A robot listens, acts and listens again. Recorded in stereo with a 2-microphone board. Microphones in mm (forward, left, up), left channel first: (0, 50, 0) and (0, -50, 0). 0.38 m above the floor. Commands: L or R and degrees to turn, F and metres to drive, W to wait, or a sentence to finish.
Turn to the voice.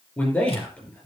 L30
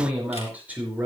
R15
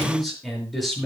Facing the man speaking.